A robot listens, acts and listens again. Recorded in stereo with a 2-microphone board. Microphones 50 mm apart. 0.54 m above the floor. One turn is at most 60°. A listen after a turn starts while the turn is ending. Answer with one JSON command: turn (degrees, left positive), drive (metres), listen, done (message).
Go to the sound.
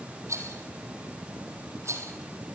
{"turn": -60}
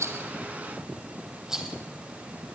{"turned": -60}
{"turn": -10}
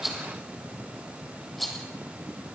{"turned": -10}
{"drive": 1.0}
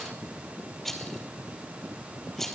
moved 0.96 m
{"drive": 1.0}
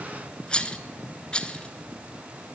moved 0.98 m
{"turn": 20}
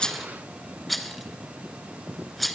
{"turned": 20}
{"drive": 1.0}
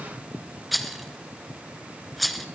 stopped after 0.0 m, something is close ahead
{"done": "Arrived at the rattle, straight ahead."}